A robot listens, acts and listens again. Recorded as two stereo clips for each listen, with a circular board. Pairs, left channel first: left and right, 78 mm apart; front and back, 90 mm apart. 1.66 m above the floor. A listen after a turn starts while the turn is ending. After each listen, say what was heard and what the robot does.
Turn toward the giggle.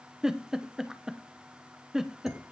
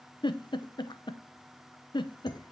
The giggle: 10° right. Turn 10° right.
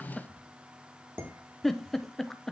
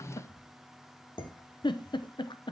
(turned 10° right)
Found it: a giggle, straight ahead.